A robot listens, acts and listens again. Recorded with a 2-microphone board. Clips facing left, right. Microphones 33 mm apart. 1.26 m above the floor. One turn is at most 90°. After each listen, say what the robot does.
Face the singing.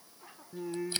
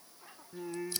Turn 30° right.
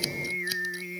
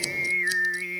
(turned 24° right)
Turn 90° right.
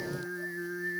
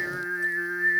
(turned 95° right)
Turn 55° right.
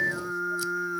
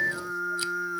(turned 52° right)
Found it: singing, straight ahead.